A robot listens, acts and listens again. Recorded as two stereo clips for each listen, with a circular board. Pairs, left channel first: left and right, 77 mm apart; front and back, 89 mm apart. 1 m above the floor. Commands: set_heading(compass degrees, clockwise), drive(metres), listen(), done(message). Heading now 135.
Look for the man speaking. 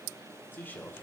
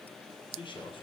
set_heading(110)
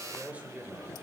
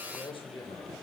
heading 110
set_heading(130)
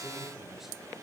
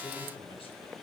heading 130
done("Facing the man speaking, 2 to 4 m away.")